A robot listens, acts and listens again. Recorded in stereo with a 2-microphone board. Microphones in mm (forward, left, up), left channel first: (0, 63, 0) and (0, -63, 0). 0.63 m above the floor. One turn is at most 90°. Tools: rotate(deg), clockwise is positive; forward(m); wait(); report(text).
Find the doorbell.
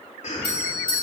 rotate(-35)
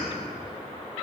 wait()
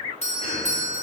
rotate(-90)
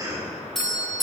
report("Found it: a doorbell, straight ahead.")